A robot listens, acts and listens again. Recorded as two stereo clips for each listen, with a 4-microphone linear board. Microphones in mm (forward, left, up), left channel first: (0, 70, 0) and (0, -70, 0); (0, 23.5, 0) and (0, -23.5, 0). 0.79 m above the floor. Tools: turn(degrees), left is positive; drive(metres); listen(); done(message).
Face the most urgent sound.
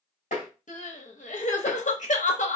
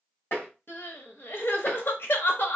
turn(degrees=60)
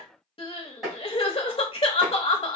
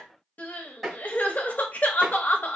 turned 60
turn(degrees=45)
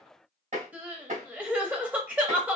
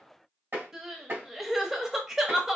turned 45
turn(degrees=-10)
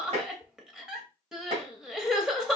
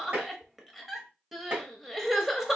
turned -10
done("Facing the crying.")